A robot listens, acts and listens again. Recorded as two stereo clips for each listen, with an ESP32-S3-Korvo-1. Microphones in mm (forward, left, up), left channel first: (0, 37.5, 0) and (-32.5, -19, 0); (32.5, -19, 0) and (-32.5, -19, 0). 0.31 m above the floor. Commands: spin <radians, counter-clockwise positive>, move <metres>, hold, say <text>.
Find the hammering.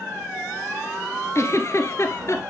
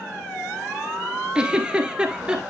hold
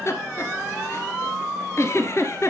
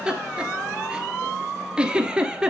hold
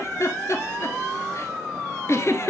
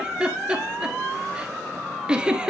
say I can't make out hammering to turn to.